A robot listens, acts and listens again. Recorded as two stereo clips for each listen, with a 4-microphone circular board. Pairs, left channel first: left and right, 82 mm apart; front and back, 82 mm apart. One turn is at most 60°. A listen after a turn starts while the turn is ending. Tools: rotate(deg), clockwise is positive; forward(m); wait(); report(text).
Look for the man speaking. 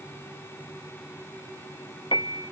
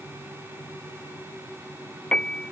wait()
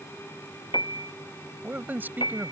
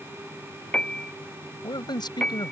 rotate(25)
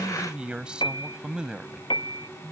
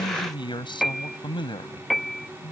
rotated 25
rotate(10)
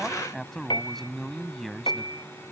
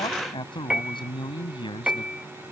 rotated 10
report("Facing the man speaking.")